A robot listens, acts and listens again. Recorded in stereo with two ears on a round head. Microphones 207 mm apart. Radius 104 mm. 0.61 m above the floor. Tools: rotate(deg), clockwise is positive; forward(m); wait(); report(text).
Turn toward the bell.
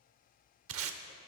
wait()
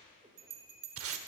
rotate(70)
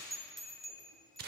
report("Found it: a bell, straight ahead.")